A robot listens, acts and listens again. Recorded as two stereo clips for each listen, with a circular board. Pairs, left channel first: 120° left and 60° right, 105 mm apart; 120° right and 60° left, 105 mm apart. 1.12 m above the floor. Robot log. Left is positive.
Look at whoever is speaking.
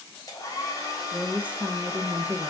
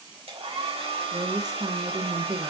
note: The woman speaking: 15° left.
cmd yaw +15
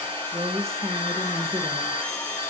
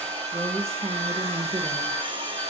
end: Facing the woman speaking, 1 to 2 m away.